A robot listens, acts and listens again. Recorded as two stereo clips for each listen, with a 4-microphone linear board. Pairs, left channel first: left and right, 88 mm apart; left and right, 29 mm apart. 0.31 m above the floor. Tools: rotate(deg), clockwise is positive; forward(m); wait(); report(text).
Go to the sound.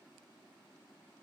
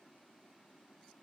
wait()
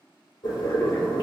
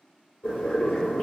rotate(-50)
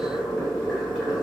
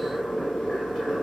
forward(1.0)
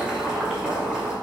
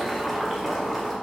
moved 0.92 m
rotate(10)
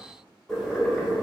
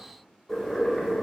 forward(1.0)
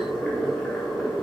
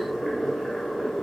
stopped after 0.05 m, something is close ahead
report("I am next to the boiling.")